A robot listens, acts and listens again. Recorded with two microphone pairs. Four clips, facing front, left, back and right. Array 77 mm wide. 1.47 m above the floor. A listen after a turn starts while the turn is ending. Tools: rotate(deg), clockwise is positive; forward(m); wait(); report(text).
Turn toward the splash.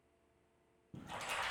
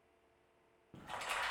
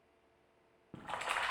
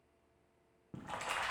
rotate(160)
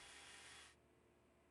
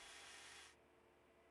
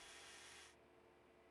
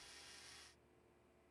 report("I heard a splash from this way, but can't make it out now.")